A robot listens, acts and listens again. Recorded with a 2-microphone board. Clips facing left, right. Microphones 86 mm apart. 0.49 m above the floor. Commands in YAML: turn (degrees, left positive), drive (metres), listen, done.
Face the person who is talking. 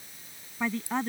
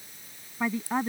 turn: -30
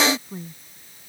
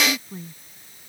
turn: 15
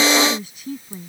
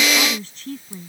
turn: 10
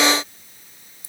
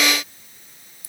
listen: true
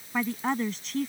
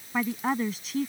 done: "Facing the woman speaking."